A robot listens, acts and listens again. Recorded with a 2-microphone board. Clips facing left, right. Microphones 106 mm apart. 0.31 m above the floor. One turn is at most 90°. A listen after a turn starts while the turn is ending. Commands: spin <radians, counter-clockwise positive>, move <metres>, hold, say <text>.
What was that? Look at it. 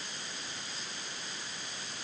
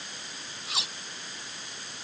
spin -1.57
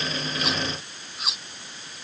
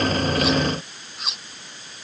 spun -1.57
say Found it: cutlery clinking, straight ahead.